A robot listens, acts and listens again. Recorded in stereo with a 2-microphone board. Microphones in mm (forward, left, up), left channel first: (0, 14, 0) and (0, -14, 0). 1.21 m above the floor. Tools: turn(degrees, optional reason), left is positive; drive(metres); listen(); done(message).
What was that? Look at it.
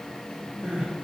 turn(degrees=-90)
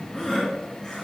turn(degrees=10, reason="So it is at 10° left.")
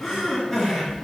done("Facing the crying, 2 to 4 m away.")